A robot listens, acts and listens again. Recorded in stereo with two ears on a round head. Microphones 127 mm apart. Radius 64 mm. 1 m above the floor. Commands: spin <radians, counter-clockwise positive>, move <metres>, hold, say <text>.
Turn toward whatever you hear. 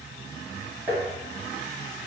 spin -0.35
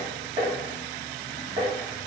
spin -2.44
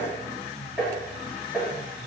say Found it: tapping, straight ahead.